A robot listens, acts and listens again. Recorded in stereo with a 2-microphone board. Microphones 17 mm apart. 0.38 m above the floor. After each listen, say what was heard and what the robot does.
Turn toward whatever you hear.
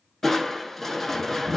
Turn 30° left.
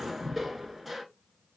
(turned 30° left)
So it is at 20° right. Turn 20° right.
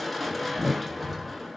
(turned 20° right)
The crushing is now 10° right. Turn 10° right.
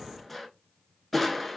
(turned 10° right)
Facing the crushing, under 1 m away.